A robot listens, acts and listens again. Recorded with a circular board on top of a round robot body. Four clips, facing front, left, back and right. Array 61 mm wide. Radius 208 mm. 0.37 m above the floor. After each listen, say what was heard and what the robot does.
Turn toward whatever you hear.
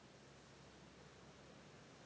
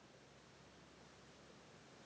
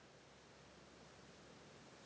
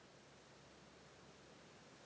Keep listening.
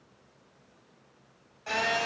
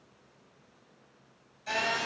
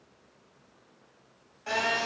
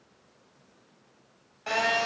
The phone buzzing: 90° right. Turn 90° right.
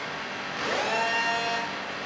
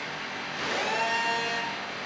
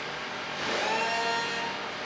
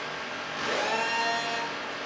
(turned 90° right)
The phone buzzing is now 10° right. Turn 10° right.
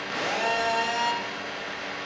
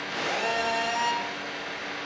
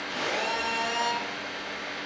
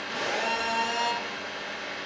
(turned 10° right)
Facing the phone buzzing.